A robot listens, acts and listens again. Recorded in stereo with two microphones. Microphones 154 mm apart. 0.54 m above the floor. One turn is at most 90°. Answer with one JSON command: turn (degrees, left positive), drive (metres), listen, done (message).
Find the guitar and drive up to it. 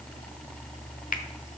{"listen": true}
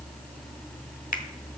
{"listen": true}
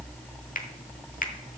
{"done": "I can't make out a guitar to turn to."}